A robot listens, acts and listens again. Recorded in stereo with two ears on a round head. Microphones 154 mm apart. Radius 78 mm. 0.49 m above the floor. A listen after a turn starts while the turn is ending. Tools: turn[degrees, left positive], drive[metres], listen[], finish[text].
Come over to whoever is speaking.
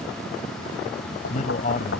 Thought: The man speaking: about 40° left or 140° left.
Action: turn[40]
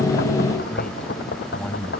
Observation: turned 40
Action: drive[1.0]
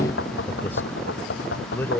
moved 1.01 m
Thought: The man speaking is now 15° left.
Action: turn[15]
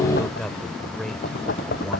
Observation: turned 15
Action: drive[1.0]
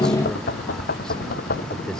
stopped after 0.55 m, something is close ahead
Action: listen[]
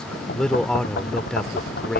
Action: finish[I am next to the man speaking.]